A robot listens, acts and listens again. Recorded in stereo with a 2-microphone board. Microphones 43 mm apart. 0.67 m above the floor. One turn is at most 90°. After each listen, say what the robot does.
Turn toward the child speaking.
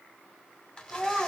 Turn 30° left.
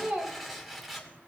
Turn 35° right.
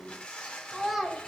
Facing the child speaking.